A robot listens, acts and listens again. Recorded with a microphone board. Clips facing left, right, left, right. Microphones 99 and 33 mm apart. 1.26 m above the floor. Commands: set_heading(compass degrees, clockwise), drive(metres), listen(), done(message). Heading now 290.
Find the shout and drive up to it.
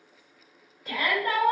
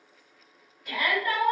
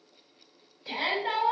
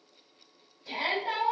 set_heading(255)
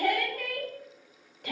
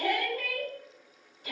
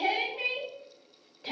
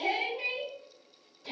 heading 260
set_heading(145)
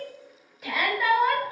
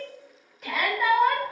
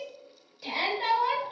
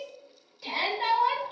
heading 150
drive(1.0)
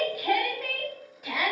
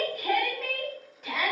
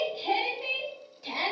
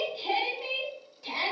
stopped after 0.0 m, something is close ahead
done("Something is in my way. I am facing the shout but have not reached it.")